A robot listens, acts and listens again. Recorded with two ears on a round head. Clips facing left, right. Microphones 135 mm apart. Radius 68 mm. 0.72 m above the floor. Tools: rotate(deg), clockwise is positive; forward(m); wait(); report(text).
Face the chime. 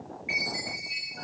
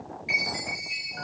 rotate(40)
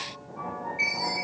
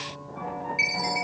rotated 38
rotate(105)
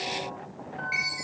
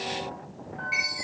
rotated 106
report("Facing the chime.")